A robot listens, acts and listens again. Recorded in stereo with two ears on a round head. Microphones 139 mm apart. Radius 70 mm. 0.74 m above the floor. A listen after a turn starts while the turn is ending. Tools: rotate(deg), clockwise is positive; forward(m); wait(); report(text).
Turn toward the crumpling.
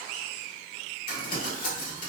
rotate(-55)
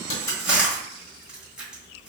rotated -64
report("Found it: crumpling, straight ahead, 1 to 2 m away.")